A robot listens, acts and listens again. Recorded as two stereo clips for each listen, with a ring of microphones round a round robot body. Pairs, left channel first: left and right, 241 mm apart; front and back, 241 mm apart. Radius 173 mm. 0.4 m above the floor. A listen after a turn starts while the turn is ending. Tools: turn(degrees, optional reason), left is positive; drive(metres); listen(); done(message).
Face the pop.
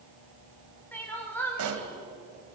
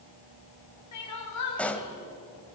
turn(degrees=-85, reason="The pop: 85° right.")
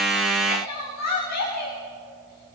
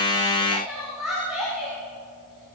done("Facing where the pop came from. I can't hear it now.")